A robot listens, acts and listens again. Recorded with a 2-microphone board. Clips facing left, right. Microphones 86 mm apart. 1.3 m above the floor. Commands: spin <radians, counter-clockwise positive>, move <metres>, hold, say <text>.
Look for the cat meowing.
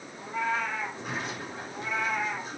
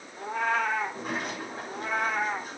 spin -0.79
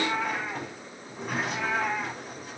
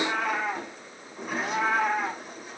spin -0.87
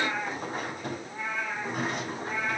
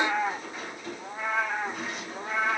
spin -1.40
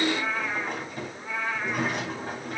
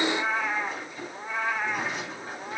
spin -0.35
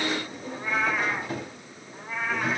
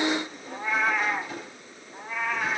say Facing the cat meowing, 2 to 4 m away.